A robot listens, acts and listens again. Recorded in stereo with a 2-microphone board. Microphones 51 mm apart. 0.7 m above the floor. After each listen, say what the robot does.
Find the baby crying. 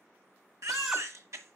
Turn 70° right.
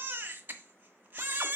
Turn 35° right.
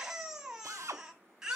Turn 10° right.
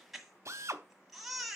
Found it: a baby crying, straight ahead.